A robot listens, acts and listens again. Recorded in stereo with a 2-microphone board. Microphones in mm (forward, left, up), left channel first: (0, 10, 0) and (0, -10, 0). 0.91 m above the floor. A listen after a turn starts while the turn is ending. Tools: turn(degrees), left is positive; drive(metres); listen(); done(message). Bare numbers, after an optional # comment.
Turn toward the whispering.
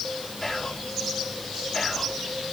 # The whispering: about 20° left or 160° left.
turn(20)
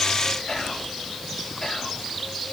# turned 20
# So it is at 140° left.
turn(140)
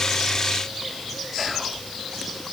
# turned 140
listen()
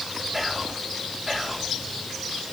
# The whispering is now 10° right.
turn(-10)
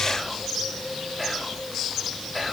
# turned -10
done("Facing the whispering, 2 to 4 m away.")